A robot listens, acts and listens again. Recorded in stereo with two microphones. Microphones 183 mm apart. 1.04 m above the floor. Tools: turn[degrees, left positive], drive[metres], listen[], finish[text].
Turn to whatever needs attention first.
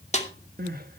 Thought: The crying: about 55° right or 125° right.
Action: turn[-55]
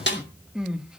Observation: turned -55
Action: finish[Facing the crying, 1 to 2 m away.]